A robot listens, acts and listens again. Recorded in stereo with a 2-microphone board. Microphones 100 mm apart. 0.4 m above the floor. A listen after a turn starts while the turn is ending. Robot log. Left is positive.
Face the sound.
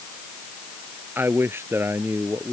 note: The man speaking: about 25° right or 155° right.
cmd yaw -25
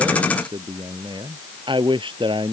note: So it is at 125° right.
cmd yaw -125
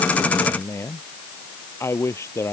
note: The man speaking is now 25° left.
cmd yaw +25
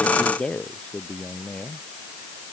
note: The man speaking is now 10° left.
cmd yaw +10
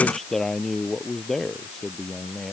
end: Found it: a man speaking, straight ahead.